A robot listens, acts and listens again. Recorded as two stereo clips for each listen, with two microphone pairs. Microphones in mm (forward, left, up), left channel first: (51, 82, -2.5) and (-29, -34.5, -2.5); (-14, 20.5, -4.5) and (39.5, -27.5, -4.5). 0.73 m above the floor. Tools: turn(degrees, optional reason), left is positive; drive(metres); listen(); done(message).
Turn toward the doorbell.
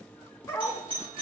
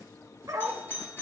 turn(degrees=-170, reason="The doorbell: 170° right.")
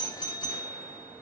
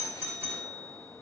done("Facing the doorbell.")